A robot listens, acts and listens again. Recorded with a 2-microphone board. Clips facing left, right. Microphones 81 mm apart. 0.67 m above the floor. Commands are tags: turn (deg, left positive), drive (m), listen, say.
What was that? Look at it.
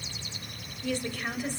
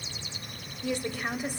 <turn deg="-30"/>
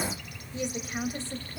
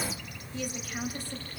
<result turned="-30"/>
<turn deg="30"/>
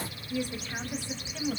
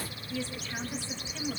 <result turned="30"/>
<turn deg="20"/>
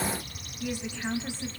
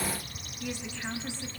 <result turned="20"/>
<turn deg="15"/>
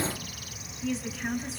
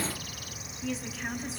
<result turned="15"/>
<say>Facing the woman speaking.</say>